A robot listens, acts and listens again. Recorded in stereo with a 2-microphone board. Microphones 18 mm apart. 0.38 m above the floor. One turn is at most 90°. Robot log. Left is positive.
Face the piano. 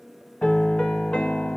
cmd yaw +90
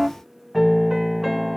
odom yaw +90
end: Found it: a piano, straight ahead.